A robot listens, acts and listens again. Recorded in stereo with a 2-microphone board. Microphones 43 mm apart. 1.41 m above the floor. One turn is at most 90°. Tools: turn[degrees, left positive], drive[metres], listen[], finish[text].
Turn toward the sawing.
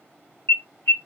Action: listen[]
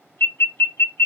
Action: listen[]
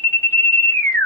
Action: finish[I can't make out sawing to turn to.]